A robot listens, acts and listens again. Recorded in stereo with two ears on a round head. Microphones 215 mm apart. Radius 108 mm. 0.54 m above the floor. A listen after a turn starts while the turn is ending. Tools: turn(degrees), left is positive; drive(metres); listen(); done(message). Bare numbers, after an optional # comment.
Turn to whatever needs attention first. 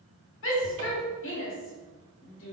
# The shout: about 55° left or 125° left.
turn(55)
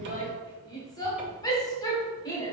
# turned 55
# So it is at 20° left.
turn(20)
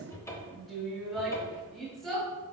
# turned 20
done("Found it: a shout, straight ahead.")